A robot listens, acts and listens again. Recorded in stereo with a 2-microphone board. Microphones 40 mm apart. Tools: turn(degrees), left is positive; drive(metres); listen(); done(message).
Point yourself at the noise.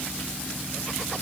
listen()
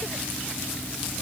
listen()
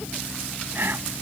turn(degrees=-60)
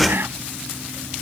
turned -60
turn(degrees=-60)
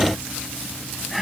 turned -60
done("Found it: whispering, straight ahead.")